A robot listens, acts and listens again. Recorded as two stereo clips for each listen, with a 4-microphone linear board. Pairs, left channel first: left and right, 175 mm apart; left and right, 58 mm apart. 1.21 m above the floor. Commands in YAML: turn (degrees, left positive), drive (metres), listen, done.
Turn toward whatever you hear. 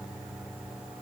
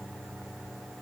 listen: true
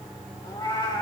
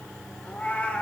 turn: 25
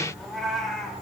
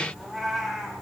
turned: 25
done: "Facing the cat meowing."